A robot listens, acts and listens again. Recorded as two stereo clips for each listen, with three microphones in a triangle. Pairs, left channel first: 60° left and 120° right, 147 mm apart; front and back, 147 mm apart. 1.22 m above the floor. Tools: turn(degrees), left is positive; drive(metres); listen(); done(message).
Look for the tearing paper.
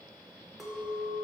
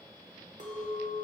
listen()
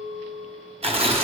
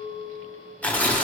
turn(degrees=-80)
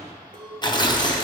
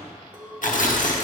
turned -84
done("Facing the tearing paper.")